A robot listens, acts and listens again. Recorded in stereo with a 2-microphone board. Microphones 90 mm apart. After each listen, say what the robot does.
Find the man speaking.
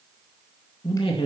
Turn 90° left.
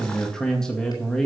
Found it: a man speaking, straight ahead.